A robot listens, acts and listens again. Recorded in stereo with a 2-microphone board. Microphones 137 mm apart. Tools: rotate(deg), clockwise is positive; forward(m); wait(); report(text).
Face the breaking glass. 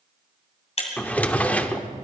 rotate(-50)
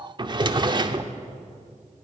wait()
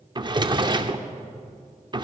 report("I heard breaking glass, but can't make it out now. It was about straight ahead or 80° left.")